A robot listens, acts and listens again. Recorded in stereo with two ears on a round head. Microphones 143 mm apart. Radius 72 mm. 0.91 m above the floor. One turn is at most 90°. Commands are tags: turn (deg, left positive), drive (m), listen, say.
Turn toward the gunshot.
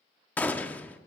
<turn deg="30"/>
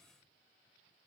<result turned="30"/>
<listen/>
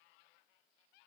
<say>I heard a gunshot, but can't make it out now. It was about 20° right or 140° left.</say>